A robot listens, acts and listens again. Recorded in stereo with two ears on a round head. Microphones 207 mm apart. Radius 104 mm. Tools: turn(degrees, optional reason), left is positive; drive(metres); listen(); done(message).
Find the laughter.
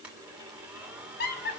turn(degrees=45, reason="The laughter: about 45° left or 135° left.")
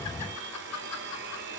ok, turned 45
turn(degrees=80, reason="So it is at 80° left.")
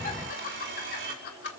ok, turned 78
turn(degrees=45, reason="The laughter is now 45° left.")
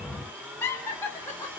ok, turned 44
turn(degrees=10, reason="The laughter is now 10° left.")
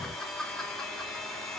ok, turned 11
done("Facing the laughter, 2 to 4 m away.")